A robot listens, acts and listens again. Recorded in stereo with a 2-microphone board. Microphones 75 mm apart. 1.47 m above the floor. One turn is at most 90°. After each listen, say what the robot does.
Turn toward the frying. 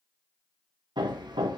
Keep listening.
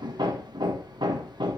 Keep listening.
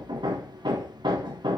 I can't make out frying, only hammering.